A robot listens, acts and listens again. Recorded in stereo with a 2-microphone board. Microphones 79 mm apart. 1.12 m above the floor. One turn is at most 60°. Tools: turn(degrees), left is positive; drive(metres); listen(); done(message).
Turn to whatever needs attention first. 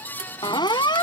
turn(degrees=60)
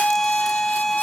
done("Facing the siren.")